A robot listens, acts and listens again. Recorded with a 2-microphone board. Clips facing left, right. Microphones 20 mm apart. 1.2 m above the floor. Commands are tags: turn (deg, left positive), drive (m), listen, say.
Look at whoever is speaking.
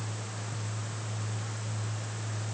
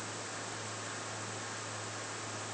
<listen/>
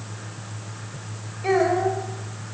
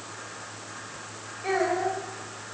<turn deg="25"/>
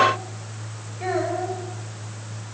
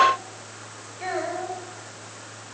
<say>Facing the child speaking.</say>